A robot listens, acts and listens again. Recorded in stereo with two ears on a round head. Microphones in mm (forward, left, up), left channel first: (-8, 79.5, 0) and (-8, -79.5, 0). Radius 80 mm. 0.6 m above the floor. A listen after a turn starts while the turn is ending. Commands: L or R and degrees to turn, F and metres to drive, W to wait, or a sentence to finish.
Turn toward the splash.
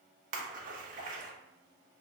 R50
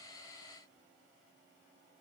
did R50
W
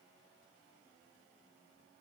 I heard a splash, but can't make it out now. It was about straight ahead or 80° right.